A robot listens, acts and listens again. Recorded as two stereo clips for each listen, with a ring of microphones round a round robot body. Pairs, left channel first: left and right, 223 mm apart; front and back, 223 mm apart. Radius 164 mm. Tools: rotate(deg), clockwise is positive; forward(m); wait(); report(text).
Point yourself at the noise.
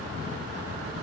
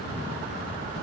wait()
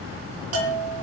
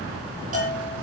rotate(115)
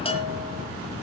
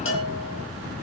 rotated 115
rotate(-25)
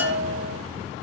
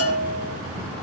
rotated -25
report("Found it: a bell, straight ahead.")